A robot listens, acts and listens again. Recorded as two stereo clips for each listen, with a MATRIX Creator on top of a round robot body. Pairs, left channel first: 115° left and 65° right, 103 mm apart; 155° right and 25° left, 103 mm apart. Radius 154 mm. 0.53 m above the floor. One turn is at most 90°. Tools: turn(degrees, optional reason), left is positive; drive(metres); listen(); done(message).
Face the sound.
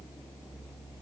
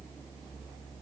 listen()
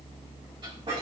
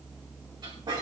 turn(degrees=-25, reason="The squeak: 25° right.")
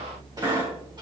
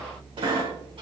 turn(degrees=-15, reason="The squeak is now 15° right.")
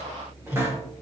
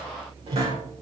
done("Found it: a squeak, straight ahead.")